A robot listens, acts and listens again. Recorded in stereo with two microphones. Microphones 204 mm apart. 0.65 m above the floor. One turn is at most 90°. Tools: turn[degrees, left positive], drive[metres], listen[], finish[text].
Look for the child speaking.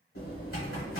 Action: listen[]
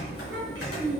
Thought: The child speaking: about 65° right or 115° right.
Action: turn[-65]
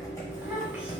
Action: finish[Found it: a child speaking, straight ahead.]